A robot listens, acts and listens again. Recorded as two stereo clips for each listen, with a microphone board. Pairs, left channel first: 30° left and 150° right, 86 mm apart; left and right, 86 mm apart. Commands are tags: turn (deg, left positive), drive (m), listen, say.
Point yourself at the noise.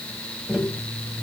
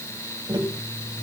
<turn deg="-70"/>
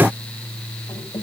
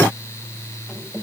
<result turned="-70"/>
<say>Facing the tapping.</say>